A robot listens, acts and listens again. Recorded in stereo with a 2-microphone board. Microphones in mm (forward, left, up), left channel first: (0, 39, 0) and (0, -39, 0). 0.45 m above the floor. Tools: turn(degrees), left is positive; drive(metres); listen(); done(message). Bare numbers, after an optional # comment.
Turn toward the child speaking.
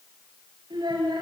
turn(-90)
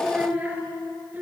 # So it is at 20° right.
turn(-20)
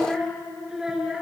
# The child speaking is now 10° right.
turn(-10)
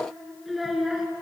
done("Found it: a child speaking, straight ahead, 2 to 4 m away.")